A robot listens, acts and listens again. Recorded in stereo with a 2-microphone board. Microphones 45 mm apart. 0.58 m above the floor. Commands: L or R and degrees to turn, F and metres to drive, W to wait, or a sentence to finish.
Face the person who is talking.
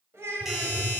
R90
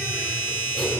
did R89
W
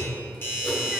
W
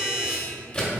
Facing where the child speaking came from. I can't hear it now.